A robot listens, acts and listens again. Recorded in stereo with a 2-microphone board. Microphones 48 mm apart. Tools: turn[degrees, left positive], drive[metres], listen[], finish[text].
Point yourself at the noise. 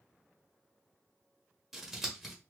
Action: turn[-30]
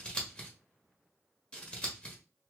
Thought: So it is at 25° left.
Action: turn[25]
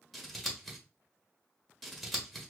Action: finish[Facing the scissors.]